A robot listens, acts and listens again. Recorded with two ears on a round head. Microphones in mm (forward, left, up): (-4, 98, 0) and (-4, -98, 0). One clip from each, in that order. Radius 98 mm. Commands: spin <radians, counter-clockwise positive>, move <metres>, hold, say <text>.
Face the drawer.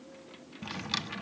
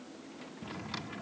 spin 1.57
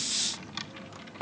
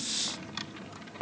spin 0.26
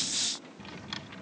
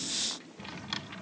say Found it: a drawer, straight ahead.